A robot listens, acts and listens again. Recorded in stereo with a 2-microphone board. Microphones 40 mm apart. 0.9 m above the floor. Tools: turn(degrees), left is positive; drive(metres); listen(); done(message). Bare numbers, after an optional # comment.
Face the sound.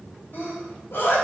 # The sneeze: about 65° left or 115° left.
turn(65)
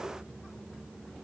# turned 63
listen()
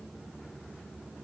done("I heard a sneeze, but can't make it out now. It was about straight ahead or 50° left.")